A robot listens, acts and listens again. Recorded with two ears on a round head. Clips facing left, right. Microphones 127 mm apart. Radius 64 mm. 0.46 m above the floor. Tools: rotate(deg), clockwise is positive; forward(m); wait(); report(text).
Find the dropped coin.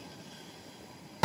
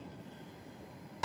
wait()
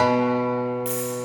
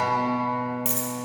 rotate(55)
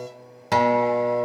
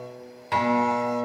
wait()
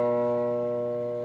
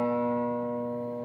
report("I heard a dropped coin, but can't make it out now. It was about straight ahead or 70° right.")